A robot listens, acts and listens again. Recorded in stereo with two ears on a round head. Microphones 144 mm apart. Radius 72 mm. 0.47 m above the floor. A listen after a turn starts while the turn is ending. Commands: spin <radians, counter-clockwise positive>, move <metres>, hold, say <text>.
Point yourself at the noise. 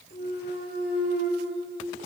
spin 0.96
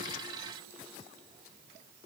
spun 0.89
hold
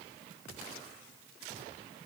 say I heard a clunk, but can't make it out now. It was about straight ahead or 75° left.